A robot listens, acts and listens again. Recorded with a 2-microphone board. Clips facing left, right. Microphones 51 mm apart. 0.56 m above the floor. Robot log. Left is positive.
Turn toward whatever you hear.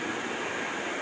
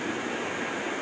cmd idle
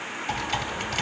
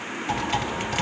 cmd yaw -30
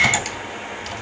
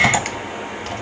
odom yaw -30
note: So it is at 140° right.
cmd yaw -140
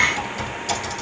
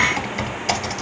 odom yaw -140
note: The typing on a keyboard is now 50° right.
cmd yaw -50
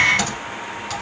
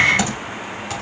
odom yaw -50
note: The typing on a keyboard is now 10° right.
cmd yaw -10
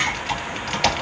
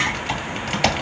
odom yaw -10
end: Found it: typing on a keyboard, straight ahead.